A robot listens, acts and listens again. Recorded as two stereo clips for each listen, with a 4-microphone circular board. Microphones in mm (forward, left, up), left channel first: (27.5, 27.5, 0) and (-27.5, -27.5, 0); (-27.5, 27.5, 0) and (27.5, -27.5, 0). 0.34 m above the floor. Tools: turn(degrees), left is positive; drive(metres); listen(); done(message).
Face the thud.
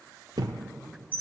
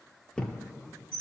turn(degrees=-145)
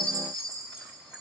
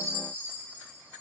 done("I heard a thud from this way, but can't make it out now.")